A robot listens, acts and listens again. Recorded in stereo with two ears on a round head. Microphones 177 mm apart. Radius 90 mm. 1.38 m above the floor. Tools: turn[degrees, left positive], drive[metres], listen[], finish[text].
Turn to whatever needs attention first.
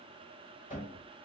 Action: listen[]
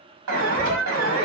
Action: turn[-90]
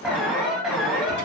Action: finish[Facing the alarm.]